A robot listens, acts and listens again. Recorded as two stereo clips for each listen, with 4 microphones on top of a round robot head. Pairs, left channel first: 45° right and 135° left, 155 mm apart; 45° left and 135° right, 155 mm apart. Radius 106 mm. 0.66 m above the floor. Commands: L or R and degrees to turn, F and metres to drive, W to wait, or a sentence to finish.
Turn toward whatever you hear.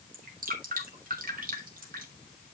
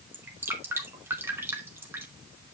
L150
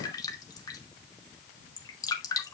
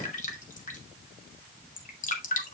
L15
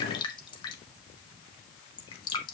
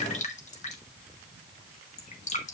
L10
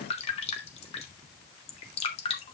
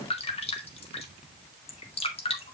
Facing the dripping.